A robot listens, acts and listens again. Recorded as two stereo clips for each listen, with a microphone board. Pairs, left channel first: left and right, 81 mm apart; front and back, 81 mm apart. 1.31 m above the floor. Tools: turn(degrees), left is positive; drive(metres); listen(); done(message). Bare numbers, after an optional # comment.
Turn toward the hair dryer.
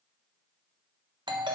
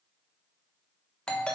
listen()
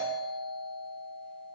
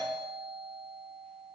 listen()
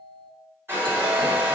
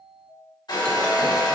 # The hair dryer: 30° right.
turn(-30)
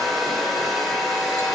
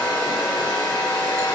done("Facing the hair dryer.")